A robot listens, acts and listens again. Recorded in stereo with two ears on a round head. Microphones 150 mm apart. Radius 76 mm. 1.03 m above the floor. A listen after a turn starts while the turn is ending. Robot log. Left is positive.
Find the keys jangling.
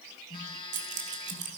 note: The keys jangling: about 50° right or 130° right.
cmd yaw -50
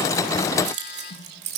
note: So it is at 80° right.
cmd yaw -80
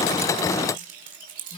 note: The keys jangling is now 55° right.
cmd yaw -55
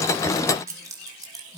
note: The keys jangling is now 25° right.
cmd yaw -25
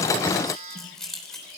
end: Found it: keys jangling, straight ahead, 2 to 4 m away.